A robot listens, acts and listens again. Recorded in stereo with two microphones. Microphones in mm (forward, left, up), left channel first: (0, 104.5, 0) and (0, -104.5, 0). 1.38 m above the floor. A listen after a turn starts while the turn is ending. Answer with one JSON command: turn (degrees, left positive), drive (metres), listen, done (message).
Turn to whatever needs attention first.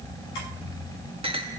{"listen": true}
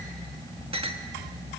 {"listen": true}
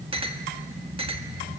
{"done": "I can't make out anything urgent, only a clink."}